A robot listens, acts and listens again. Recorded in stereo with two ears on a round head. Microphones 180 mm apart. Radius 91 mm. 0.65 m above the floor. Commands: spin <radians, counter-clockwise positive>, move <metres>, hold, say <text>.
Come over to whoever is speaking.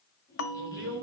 spin -1.13
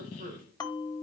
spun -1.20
spin -0.70
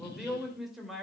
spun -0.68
move 1.0
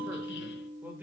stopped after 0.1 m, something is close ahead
spin -0.17
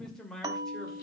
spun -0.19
say Something is in my way. I am facing the man speaking but have not reached it.